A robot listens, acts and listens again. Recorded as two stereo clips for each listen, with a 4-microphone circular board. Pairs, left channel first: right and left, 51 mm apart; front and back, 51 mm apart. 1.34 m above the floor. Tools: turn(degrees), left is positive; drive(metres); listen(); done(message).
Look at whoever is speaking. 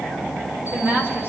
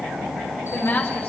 turn(degrees=35)
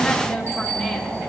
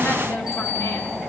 listen()
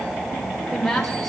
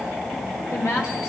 done("Facing the woman speaking.")